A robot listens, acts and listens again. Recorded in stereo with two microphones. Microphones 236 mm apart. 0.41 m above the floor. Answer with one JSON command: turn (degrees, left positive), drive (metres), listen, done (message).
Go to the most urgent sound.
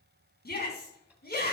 {"turn": 40}
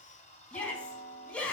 {"drive": 1.0}
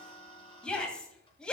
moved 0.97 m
{"drive": 1.0}
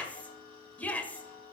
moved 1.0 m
{"turn": 10}
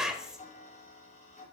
{"drive": 1.0}
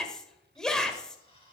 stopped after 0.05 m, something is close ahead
{"done": "I am next to the shout."}